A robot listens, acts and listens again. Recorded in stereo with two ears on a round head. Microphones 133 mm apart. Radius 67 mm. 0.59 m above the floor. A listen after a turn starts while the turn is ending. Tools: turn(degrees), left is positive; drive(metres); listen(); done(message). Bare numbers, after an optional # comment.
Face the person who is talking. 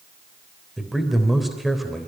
turn(30)
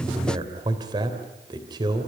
# So it is at 35° right.
turn(-35)
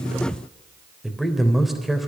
done("Found it: a man speaking, straight ahead, 2 to 4 m away.")